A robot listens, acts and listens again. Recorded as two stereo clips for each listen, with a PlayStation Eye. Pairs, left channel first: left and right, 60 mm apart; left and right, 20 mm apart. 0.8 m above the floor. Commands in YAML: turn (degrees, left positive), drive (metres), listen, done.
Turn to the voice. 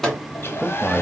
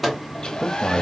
turn: 30
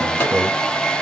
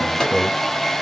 turn: -25
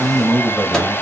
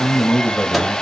done: "Facing the man speaking."